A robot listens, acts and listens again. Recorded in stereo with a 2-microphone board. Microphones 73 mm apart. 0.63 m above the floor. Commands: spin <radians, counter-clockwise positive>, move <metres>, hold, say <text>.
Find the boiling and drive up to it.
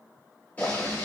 spin 0.44
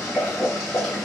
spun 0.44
move 1.0
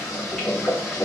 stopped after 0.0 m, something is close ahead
say Blocked. The boiling is further on, straight ahead.